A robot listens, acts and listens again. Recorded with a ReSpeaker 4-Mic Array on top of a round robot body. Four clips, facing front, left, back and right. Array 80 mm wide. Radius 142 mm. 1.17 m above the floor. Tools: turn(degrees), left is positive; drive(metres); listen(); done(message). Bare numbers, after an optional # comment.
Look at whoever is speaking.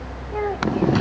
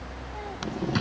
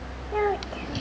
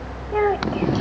# The child speaking: 95° right.
turn(-95)
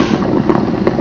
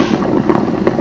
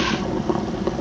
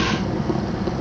listen()
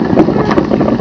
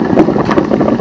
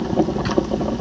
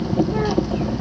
listen()
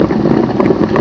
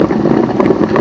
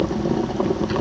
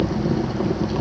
done("I heard a child speaking from this way, but can't make it out now.")